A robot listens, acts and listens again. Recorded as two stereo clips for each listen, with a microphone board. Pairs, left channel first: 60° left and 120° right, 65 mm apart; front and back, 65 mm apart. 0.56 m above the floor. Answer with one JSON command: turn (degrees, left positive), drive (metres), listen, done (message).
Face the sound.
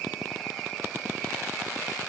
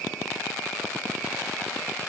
{"listen": true}
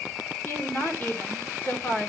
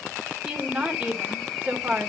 {"turn": 115}
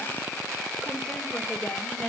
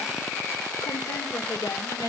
{"turn": -10}
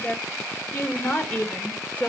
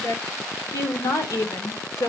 {"done": "Facing the woman speaking."}